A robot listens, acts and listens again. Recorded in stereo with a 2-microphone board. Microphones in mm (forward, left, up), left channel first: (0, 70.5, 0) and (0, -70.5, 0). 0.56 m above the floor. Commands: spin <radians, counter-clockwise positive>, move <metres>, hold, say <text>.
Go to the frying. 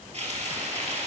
spin -0.87
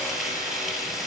move 1.0
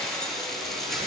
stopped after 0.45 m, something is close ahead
say Blocked. The frying is further on, straight ahead.